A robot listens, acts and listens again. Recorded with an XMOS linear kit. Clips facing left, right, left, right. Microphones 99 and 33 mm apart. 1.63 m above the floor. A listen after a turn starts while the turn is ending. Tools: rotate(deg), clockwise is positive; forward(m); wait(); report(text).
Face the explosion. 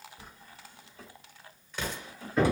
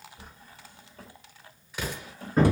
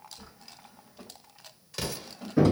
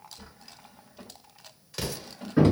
rotate(30)
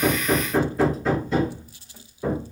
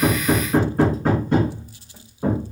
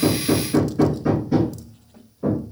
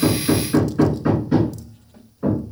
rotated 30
wait()
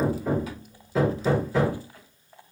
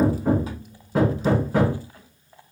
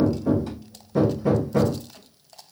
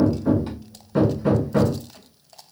report("I heard an explosion, but can't make it out now. It was about 25° left or 145° right.")